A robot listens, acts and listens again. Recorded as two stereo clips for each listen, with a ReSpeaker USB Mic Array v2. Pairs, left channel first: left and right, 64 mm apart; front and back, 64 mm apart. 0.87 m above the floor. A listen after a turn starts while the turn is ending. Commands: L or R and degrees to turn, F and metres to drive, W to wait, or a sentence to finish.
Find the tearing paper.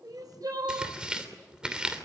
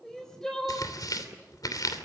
R15
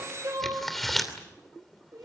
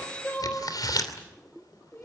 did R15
Found it: tearing paper, straight ahead.